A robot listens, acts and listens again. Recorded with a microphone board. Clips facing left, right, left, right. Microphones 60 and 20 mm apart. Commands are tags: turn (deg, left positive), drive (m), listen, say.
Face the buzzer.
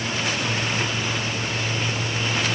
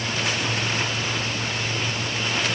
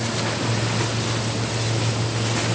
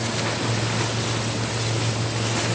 <listen/>
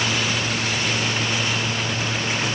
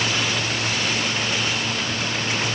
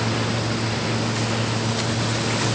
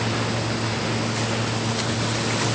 <listen/>
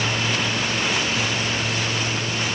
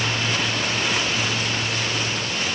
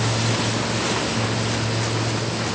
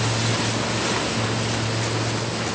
<say>I can't make out a buzzer to turn to.</say>